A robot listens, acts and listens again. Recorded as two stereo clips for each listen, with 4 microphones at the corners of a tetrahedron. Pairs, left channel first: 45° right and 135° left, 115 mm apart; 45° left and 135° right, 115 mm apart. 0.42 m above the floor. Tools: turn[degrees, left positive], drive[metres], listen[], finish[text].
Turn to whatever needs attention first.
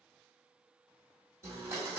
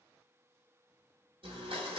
Action: listen[]
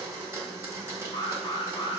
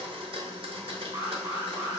Thought: The alarm: 80° right.
Action: turn[-80]
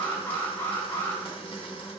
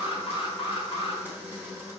Thought: The alarm is now 20° left.
Action: turn[20]
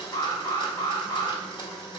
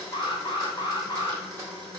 Action: finish[Found it: an alarm, straight ahead, under 1 m away.]